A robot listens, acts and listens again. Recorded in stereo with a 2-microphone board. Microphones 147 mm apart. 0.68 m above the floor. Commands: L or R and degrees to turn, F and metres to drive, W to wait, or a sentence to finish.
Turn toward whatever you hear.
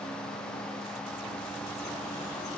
W
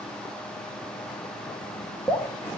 L20
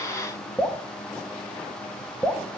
Facing the dripping, 1 to 2 m away.